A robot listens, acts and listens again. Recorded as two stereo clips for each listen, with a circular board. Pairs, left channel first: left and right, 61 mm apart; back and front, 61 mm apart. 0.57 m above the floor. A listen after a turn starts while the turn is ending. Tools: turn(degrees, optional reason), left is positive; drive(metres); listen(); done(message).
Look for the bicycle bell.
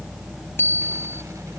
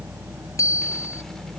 turn(degrees=145, reason="The bicycle bell: 145° left.")
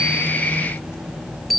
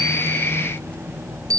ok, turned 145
done("Found it: a bicycle bell, straight ahead.")